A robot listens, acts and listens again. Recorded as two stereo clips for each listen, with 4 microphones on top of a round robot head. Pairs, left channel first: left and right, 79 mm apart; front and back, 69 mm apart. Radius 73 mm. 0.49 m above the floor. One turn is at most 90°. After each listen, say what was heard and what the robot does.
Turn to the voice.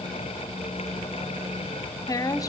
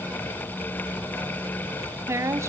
The woman speaking: 130° left. Turn 90° left.
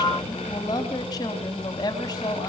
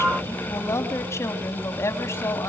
The woman speaking is now 45° left. Turn 45° left.
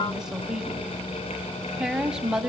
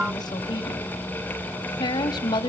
The woman speaking is now 10° right. Turn 10° right.
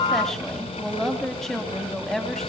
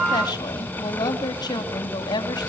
Found it: a woman speaking, straight ahead.